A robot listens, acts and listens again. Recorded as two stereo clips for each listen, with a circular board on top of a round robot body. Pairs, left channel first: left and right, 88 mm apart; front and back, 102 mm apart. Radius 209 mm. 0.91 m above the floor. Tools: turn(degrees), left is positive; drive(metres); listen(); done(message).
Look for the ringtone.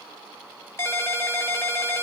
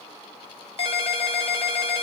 turn(degrees=25)
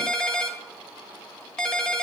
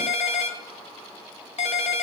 done("Found it: a ringtone, straight ahead.")